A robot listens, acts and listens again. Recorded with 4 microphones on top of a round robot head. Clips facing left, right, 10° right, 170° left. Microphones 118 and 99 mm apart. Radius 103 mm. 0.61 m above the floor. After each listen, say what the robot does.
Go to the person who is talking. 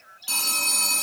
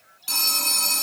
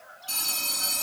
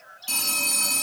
Keep listening.
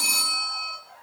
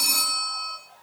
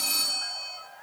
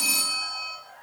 Keep listening.
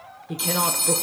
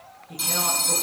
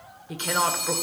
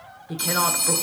Turn 85° left.
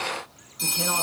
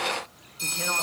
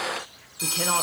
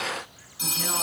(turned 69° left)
Turn 15° left.
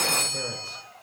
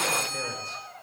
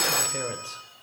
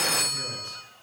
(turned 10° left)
Keep listening.
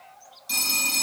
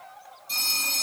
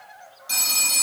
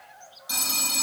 I heard a woman speaking from this way, but can't make it out now. I did not reach it.